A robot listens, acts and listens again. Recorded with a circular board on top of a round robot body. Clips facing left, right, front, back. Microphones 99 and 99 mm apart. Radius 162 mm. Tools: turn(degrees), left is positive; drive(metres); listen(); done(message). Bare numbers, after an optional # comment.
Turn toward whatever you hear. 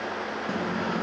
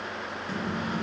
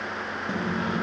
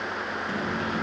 # The microwave: 60° left.
turn(60)
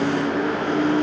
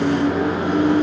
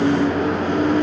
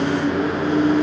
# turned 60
# The microwave is now 15° right.
turn(-15)
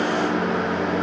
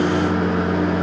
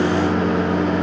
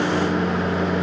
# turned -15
done("Found it: a microwave, straight ahead.")